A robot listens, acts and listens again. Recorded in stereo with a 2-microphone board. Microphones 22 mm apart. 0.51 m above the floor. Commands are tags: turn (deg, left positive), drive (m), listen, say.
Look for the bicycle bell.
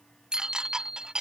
<turn deg="-35"/>
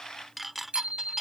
<turn deg="-110"/>
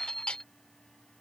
<turn deg="10"/>
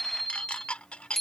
<say>Facing the bicycle bell.</say>